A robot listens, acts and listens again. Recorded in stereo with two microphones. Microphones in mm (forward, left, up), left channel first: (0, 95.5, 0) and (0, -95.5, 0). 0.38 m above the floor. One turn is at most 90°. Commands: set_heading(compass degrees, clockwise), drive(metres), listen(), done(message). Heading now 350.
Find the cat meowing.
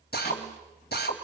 listen()
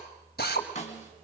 listen()
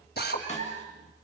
set_heading(60)
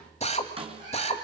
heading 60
listen()
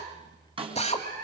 set_heading(100)
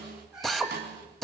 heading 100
done("Found it: a cat meowing, straight ahead, over 4 m away.")